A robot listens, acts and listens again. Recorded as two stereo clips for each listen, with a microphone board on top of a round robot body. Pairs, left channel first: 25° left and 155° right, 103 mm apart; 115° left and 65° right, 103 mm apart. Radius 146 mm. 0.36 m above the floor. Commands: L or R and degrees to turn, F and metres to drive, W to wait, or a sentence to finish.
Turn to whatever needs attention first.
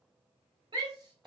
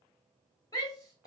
L165
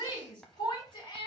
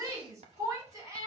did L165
R10
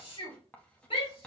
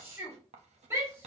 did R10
Found it: a shout, straight ahead, 2 to 4 m away.